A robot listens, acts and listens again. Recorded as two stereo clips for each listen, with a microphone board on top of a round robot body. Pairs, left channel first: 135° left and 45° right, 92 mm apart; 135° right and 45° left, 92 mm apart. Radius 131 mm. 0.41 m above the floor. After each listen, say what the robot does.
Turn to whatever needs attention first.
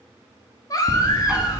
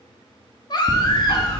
Turn 175° right.
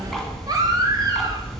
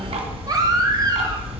Facing the baby crying.